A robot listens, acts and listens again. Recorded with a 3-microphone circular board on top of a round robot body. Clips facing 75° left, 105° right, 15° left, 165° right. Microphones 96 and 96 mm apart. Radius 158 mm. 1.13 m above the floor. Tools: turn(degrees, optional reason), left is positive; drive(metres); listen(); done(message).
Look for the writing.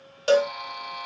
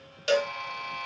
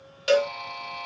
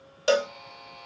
listen()
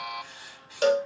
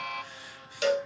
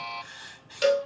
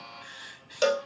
turn(degrees=80, reason="The writing: 80° left.")
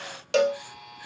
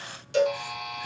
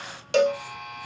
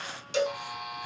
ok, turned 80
listen()
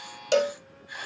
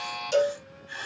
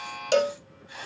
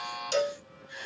done("Found it: writing, straight ahead.")